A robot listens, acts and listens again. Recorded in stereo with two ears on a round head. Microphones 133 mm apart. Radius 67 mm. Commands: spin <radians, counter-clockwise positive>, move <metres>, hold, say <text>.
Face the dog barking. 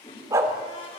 spin -0.35
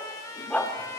spin 0.17
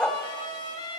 say Facing the dog barking.